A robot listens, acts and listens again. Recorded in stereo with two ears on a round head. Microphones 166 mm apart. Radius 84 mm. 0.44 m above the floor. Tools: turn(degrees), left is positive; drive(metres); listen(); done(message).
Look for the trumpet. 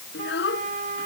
turn(degrees=-40)
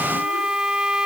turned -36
done("Facing the trumpet.")